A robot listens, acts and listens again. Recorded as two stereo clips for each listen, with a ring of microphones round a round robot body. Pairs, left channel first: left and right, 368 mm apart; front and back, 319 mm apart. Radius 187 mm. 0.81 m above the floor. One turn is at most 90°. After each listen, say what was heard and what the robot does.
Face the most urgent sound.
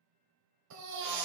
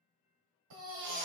The baby crying: 135° right. Turn 90° right.
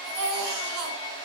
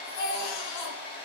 The baby crying is now 50° right. Turn 50° right.
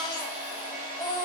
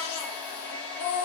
The baby crying is now 10° left. Turn 10° left.
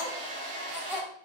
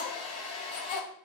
Facing the baby crying, 1 to 2 m away.